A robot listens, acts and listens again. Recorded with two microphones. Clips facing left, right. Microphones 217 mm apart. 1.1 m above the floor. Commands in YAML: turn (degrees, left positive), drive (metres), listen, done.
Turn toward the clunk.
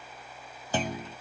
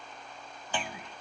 turn: 40
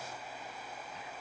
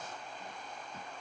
listen: true
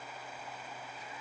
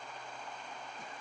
done: "I heard a clunk, but can't make it out now. It was about straight ahead or 100° left."